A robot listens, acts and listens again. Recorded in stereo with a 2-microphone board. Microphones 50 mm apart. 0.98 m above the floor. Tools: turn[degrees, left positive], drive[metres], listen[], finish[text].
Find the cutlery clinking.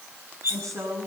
Thought: The cutlery clinking: about 60° right or 120° right.
Action: turn[-60]
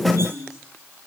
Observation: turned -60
Action: listen[]
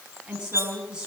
Thought: So it is at 55° right.
Action: turn[-55]
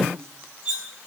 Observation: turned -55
Thought: The cutlery clinking is now 20° right.
Action: turn[-20]
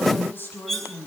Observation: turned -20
Action: finish[Facing the cutlery clinking.]